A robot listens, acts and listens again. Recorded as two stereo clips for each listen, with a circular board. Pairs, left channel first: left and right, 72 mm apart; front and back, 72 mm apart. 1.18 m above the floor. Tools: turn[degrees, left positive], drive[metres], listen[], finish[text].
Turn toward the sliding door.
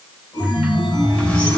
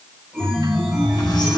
Action: listen[]
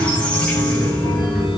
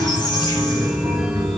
Action: listen[]
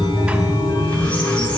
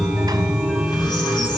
Action: finish[I can't make out a sliding door to turn to.]